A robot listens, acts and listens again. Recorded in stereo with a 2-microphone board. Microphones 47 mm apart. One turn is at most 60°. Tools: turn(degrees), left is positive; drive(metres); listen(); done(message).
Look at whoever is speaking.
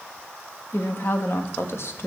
turn(degrees=60)
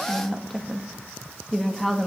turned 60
done("Facing the woman speaking, 1 to 2 m away.")